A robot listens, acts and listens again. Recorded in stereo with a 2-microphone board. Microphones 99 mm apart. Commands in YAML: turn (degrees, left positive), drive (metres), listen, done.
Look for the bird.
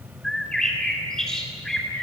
turn: 30
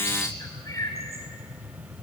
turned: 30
turn: 150
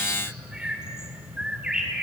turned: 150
done: "Found it: a bird, straight ahead, over 4 m away."